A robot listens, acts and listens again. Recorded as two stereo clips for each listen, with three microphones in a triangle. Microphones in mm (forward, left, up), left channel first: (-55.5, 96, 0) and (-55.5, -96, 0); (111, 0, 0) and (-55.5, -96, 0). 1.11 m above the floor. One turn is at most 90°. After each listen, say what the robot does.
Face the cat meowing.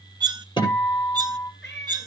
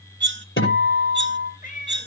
Turn 75° left.
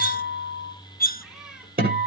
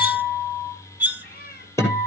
Facing the cat meowing.